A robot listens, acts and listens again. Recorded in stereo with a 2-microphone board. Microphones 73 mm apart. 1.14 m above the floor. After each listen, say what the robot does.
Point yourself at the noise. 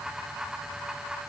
Keep listening.
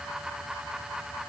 Keep listening.
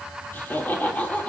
Turn 20° left.
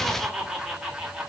Turn 10° right.
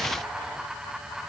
Keep listening.
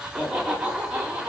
Turn 15° right.
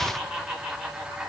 Found it: laughter, straight ahead, 2 to 4 m away.